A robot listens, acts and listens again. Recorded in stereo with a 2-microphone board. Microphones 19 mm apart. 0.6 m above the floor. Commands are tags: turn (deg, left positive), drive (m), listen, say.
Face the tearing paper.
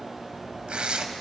<turn deg="-90"/>
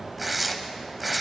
<say>Facing the tearing paper.</say>